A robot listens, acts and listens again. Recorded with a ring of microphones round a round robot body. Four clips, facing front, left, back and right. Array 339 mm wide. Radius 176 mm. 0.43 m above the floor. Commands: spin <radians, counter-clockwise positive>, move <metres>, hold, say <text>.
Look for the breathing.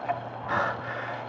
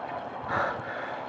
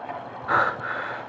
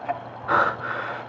spin -1.92
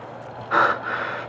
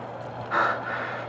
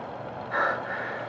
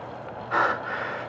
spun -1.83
say Facing the breathing, under 1 m away.